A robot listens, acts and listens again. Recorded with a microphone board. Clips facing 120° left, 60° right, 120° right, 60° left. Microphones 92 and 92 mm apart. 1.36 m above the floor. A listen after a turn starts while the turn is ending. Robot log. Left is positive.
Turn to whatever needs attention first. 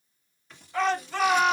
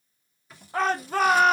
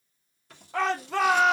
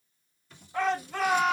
note: The shout: 110° right.
cmd yaw -110
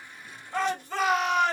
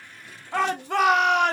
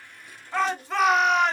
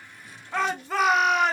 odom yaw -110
note: The shout is now 30° right.
cmd yaw -30
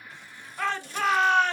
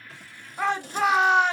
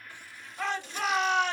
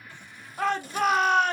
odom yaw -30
note: The shout is now 15° left.
cmd yaw +15
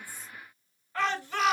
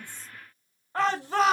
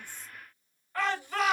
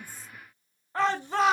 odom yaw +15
end: Facing the shout, under 1 m away.